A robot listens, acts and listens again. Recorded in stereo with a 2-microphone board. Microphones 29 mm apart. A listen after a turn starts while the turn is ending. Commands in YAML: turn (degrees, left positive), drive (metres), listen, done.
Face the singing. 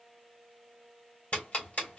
listen: true
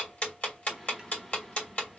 turn: 30
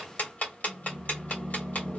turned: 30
turn: 140
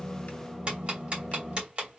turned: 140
done: "Found it: singing, straight ahead, 2 to 4 m away."